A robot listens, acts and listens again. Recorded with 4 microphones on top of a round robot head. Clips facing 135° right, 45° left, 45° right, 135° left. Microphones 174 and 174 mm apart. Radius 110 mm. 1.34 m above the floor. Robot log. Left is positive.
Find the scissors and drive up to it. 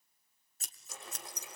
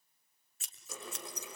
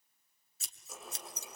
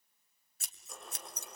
note: The scissors: 175° left.
cmd yaw +175
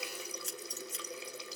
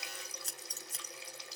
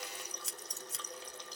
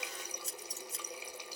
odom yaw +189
note: The scissors is now 15° right.
cmd yaw -15
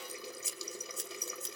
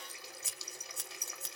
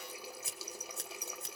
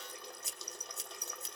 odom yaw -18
cmd fwd 1.0
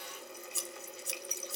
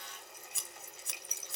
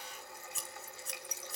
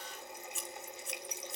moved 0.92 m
cmd fwd 1.0
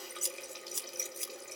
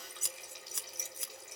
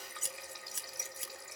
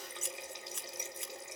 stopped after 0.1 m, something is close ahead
end: I am next to the scissors.